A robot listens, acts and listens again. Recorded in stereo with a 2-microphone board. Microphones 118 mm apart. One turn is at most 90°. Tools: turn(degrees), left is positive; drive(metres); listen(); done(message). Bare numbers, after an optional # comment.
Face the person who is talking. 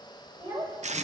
# The child speaking: about 40° right or 140° right.
turn(-40)
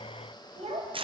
# So it is at 105° right.
turn(-90)
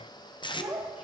# The child speaking is now 10° right.
turn(-10)
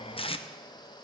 listen()
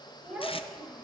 done("Facing the child speaking, 2 to 4 m away.")